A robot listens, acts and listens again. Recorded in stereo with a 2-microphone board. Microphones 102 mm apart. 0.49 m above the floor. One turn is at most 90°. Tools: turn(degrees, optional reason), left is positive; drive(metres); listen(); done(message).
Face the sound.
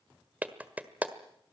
turn(degrees=-15, reason="The clap: about 15° right or 165° right.")
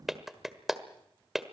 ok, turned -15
done("Found it: a clap, straight ahead, 1 to 2 m away.")